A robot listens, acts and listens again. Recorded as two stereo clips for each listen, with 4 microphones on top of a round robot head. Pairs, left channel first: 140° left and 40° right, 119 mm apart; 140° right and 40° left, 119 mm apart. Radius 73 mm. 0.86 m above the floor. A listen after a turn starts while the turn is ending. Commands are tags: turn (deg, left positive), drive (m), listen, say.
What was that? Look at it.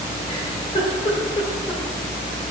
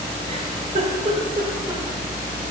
<turn deg="85"/>
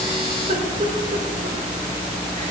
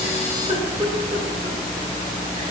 <say>Found it: a giggle, straight ahead.</say>